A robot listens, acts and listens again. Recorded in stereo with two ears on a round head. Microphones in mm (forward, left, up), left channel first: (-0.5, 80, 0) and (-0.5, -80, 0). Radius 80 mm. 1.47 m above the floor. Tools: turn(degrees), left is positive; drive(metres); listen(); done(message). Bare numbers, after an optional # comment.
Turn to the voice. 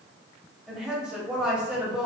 turn(-30)
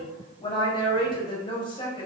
# So it is at 25° left.
turn(25)
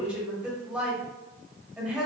done("Found it: a woman speaking, straight ahead.")